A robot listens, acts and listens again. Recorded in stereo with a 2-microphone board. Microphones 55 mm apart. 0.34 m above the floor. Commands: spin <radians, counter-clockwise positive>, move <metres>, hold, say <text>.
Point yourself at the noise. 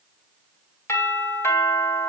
spin 0.96
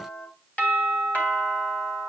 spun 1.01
spin 0.70
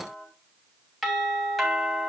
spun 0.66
say Found it: a doorbell, straight ahead, 2 to 4 m away.